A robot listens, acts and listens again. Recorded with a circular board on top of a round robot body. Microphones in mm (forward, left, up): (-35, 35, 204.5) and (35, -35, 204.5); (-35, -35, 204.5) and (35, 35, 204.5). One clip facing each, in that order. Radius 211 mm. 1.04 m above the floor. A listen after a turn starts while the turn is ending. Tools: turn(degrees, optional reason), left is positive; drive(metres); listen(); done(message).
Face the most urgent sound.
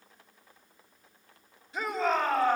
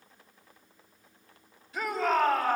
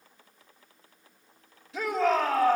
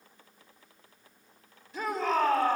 turn(degrees=-160, reason="The shout: 160° right.")
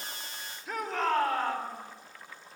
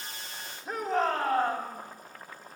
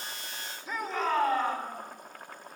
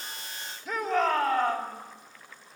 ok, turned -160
done("Found it: a shout, straight ahead.")